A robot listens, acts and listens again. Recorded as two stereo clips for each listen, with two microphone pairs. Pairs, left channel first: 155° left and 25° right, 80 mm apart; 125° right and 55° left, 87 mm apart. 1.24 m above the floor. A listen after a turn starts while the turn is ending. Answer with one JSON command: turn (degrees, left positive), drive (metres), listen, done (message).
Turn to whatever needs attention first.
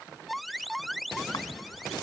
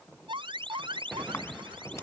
{"turn": 60}
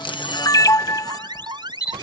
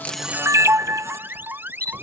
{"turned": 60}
{"turn": -10}
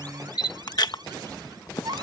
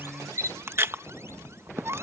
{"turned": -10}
{"done": "Found it: an alarm, straight ahead."}